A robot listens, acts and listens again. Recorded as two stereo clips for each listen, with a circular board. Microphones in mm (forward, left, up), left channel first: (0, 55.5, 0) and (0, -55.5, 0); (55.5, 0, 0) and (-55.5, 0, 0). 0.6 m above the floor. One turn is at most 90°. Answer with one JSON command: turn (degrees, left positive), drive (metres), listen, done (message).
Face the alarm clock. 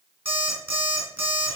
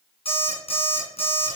{"turn": -20}
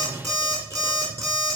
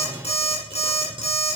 {"done": "Found it: an alarm clock, straight ahead."}